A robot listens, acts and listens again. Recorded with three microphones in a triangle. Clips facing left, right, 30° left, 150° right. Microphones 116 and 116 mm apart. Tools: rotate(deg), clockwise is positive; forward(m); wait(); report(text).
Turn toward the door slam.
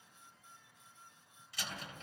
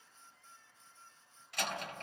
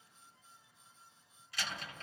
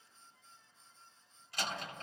rotate(110)
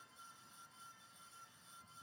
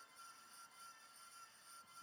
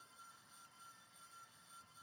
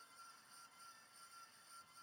report("Facing where the door slam came from. I can't hear it now.")